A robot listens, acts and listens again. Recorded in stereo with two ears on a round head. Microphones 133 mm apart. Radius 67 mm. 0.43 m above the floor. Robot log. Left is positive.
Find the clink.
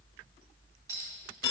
note: The clink: about 20° right or 160° right.
cmd yaw -20
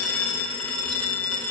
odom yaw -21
cmd idle
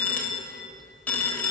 cmd idle
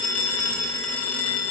end: I heard a clink, but can't make it out now. It was about straight ahead or 135° right.